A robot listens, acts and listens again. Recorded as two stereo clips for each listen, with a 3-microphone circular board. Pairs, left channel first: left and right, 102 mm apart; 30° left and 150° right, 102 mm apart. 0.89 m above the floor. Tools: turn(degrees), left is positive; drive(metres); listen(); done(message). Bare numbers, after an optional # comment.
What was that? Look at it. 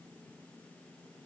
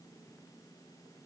listen()
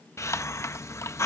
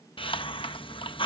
# The hiss: 35° left.
turn(35)
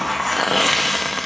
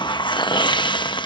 done("Facing the hiss.")